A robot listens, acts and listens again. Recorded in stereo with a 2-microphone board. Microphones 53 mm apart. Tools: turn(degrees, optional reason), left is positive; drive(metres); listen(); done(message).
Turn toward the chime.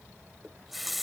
listen()
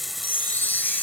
turn(degrees=35, reason="The chime: about 35° left or 145° left.")
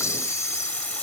listen()
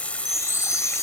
turn(degrees=110, reason="So it is at 110° left.")
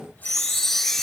done("Found it: a chime, straight ahead.")